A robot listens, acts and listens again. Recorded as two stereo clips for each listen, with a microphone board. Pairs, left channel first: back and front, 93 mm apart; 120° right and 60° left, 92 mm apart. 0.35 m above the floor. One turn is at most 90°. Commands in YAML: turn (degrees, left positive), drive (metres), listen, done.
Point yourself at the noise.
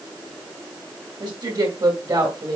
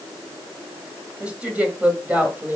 done: "Facing the woman speaking."